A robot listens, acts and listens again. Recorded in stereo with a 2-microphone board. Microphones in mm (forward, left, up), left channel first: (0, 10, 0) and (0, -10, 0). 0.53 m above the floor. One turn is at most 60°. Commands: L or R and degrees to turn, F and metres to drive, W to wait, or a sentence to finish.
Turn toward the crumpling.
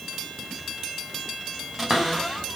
W
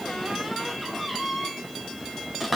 W
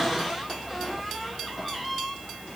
I can't make out crumpling, only a cupboard door.